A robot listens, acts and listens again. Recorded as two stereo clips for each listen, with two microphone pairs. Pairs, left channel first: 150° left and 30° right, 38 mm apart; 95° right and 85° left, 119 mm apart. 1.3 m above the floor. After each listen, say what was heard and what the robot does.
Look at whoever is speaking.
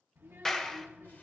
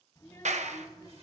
The child speaking: 35° right. Turn 35° right.
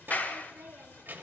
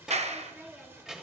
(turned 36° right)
Found it: a child speaking, straight ahead, 1 to 2 m away.